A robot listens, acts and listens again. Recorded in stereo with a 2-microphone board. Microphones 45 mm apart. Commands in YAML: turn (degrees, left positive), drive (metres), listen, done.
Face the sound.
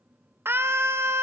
turn: -60
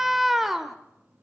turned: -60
done: "Found it: a scream, straight ahead."